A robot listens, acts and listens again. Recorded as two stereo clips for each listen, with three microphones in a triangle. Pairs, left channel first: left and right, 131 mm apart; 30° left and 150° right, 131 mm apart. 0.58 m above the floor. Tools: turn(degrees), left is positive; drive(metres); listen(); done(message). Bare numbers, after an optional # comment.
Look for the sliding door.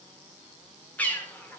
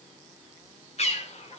listen()
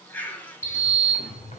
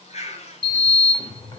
# The sliding door: 75° left.
turn(75)
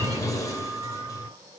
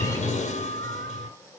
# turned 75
# The sliding door is now 30° left.
turn(30)
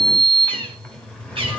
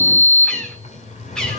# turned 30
# The sliding door is now 10° left.
turn(10)
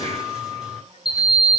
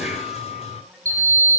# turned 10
done("Facing the sliding door, 2 to 4 m away.")